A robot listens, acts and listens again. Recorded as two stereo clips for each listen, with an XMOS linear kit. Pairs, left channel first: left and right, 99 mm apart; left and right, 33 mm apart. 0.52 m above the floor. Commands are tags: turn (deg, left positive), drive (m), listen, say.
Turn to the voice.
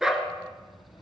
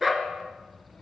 <turn deg="50"/>
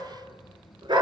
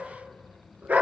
<turn deg="80"/>
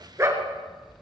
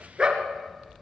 <turn deg="-20"/>
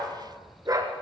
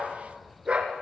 <turn deg="-10"/>
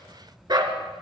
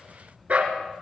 <say>Found it: a child speaking, straight ahead, 1 to 2 m away.</say>